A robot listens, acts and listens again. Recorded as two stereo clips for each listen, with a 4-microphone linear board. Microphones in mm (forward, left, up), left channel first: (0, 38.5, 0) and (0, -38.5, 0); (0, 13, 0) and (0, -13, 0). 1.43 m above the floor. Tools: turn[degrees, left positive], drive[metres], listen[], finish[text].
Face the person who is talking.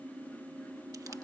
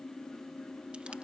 Action: listen[]
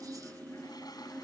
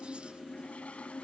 Action: listen[]
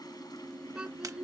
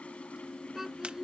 Action: turn[-30]
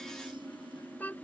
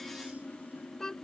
Thought: So it is at 20° left.
Action: turn[20]
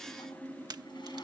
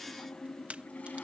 Action: listen[]
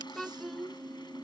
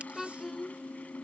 Action: finish[Facing the child speaking.]